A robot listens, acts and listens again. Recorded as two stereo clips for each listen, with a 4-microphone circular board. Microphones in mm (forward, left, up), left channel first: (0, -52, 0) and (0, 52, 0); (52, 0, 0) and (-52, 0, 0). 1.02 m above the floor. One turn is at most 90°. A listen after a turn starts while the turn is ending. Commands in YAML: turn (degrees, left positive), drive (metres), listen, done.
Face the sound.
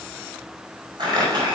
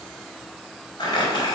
turn: 45
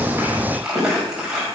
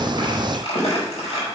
done: "Found it: crumpling, straight ahead, over 4 m away."